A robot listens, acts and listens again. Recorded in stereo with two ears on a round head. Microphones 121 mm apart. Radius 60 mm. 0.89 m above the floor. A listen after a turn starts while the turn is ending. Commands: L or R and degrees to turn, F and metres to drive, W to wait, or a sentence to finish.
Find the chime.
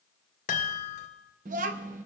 L65
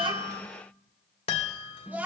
L45
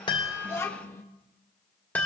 L15
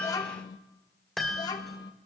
Facing the chime, 2 to 4 m away.